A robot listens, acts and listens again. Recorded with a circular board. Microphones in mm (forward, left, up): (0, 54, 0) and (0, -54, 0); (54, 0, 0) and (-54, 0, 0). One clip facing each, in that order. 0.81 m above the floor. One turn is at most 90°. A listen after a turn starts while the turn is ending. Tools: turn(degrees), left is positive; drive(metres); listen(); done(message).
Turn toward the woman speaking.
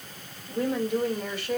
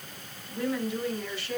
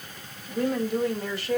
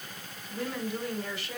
turn(degrees=50)
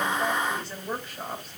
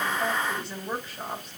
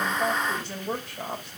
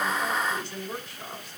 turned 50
done("Found it: a woman speaking, straight ahead.")